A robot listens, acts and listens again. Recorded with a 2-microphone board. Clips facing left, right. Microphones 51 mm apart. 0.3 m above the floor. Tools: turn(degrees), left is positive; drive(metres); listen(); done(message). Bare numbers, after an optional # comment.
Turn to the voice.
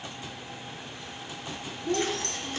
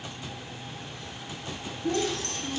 # The child speaking: about 65° right or 115° right.
turn(-65)
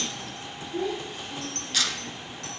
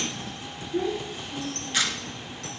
# So it is at 10° right.
turn(-10)
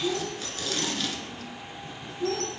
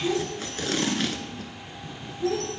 done("Facing the child speaking, over 4 m away.")